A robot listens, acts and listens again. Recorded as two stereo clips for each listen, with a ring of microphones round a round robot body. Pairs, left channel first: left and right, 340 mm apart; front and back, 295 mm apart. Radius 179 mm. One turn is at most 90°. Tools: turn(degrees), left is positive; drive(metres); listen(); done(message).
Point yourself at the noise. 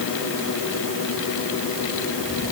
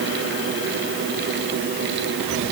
listen()
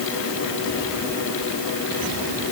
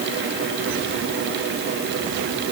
listen()
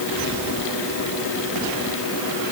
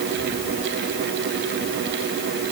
done("I can't make out anything.")